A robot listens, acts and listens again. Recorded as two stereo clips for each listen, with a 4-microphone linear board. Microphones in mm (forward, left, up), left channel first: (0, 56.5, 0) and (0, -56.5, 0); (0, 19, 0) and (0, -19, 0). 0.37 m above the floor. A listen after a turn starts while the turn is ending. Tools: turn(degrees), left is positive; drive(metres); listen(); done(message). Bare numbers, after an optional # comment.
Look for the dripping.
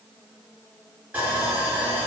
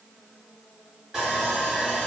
listen()
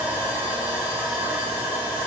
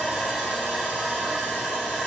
listen()
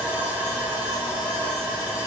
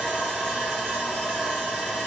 done("I can't make out dripping to turn to.")